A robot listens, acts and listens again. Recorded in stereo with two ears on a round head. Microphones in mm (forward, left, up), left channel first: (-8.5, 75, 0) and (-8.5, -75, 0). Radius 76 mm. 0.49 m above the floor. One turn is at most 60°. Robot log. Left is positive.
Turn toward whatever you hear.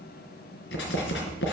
note: The writing: about 75° left or 105° left.
cmd yaw +60
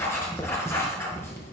note: So it is at 15° left.
cmd yaw +15
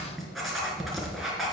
end: Facing the writing.